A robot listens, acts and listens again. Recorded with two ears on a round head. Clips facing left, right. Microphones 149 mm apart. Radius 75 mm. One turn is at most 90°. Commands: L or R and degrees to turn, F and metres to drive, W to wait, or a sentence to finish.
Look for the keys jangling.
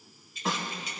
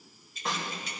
R45
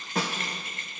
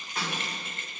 R25
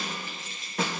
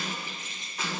R20
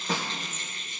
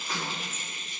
R10
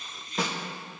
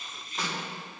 Facing the keys jangling, 2 to 4 m away.